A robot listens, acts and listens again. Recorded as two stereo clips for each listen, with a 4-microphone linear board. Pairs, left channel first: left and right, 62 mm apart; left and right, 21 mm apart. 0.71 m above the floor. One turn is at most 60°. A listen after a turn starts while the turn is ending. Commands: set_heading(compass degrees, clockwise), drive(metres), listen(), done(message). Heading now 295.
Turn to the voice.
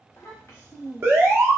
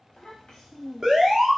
set_heading(245)
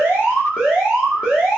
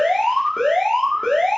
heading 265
listen()
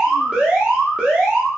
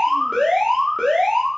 listen()
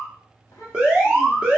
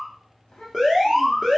set_heading(205)
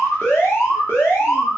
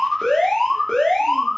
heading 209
set_heading(174)
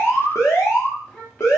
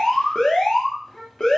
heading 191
set_heading(171)
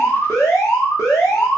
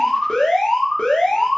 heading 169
listen()
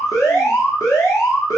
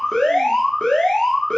listen()
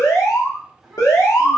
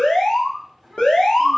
done("Found it: a child speaking, straight ahead.")